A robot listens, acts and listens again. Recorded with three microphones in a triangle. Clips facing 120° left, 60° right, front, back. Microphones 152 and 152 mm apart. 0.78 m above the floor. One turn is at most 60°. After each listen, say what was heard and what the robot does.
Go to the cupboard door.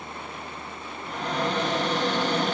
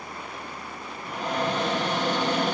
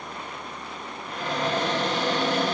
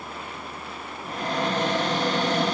The cupboard door: 135° right. Turn 60° right.
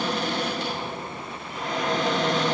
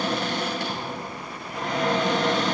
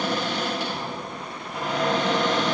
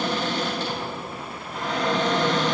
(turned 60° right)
The cupboard door is now 75° right. Turn 60° right.
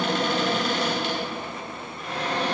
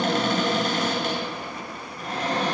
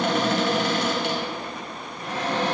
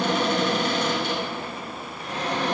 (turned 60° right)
The cupboard door is now 15° right. Turn 15° right.
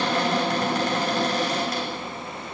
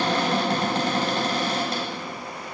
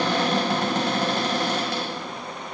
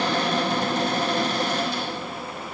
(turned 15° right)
Drive 1.0 m forward.
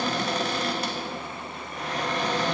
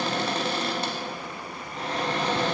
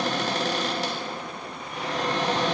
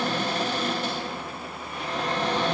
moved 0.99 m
Drive 1.0 m forward.
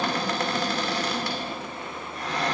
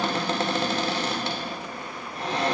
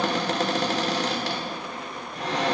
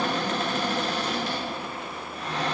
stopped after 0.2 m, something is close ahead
I am next to the cupboard door.